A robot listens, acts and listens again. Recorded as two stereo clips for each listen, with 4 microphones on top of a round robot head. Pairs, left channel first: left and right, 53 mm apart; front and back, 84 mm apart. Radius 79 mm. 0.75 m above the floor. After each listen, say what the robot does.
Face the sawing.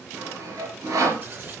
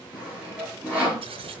Turn 105° right.
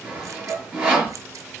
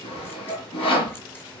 Turn 20° right.
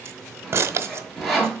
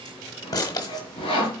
Facing the sawing.